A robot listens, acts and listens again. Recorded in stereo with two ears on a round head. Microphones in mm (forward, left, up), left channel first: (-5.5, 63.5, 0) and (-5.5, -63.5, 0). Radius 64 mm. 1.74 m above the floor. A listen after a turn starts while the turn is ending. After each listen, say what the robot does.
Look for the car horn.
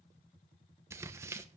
Keep listening.
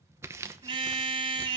Turn 35° right.
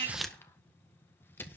Keep listening.
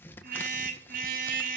Turn 110° right.
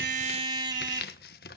Turn 30° right.
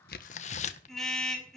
Found it: a car horn, straight ahead, over 4 m away.